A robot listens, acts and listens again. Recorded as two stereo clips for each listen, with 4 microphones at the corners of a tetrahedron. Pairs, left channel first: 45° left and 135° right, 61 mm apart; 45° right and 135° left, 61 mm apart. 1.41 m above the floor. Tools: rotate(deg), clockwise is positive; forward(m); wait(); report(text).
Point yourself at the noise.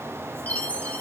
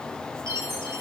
rotate(-105)
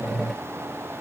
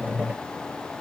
wait()
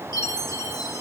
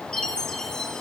rotate(-30)
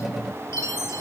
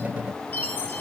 rotate(-10)
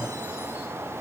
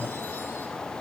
wait()
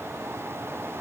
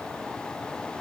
wait()
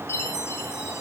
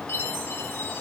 report("Facing the chime, 1 to 2 m away.")